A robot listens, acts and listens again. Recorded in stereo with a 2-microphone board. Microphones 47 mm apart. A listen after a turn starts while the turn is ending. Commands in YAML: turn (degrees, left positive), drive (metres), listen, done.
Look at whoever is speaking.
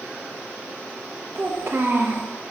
turn: -60
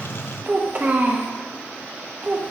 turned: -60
turn: -45
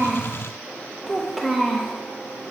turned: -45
done: "Facing the child speaking, under 1 m away."